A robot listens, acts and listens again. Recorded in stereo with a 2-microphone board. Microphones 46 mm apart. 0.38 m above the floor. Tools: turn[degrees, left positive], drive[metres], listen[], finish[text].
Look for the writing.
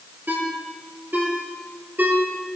Action: listen[]
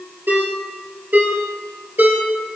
Action: listen[]
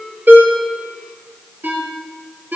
Action: finish[I can't make out writing to turn to.]